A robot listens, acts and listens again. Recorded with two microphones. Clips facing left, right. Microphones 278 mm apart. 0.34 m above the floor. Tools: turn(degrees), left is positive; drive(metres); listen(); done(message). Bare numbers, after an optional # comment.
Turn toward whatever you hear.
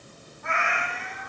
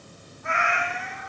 # The cat meowing: about 55° left or 125° left.
turn(55)
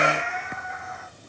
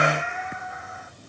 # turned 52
# So it is at 75° left.
turn(75)
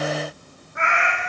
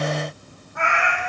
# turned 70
# The cat meowing is now 25° left.
turn(25)
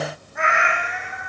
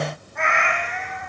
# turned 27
# The cat meowing is now 10° left.
turn(10)
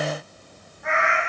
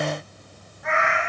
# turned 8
done("Facing the cat meowing, 2 to 4 m away.")